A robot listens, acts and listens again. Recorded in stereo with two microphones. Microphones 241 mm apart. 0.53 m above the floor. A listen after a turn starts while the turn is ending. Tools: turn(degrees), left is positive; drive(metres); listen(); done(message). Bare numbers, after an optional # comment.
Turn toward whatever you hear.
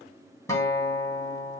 turn(30)
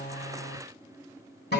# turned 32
# So it is at 135° left.
turn(135)
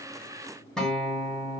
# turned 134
done("Found it: a guitar, straight ahead.")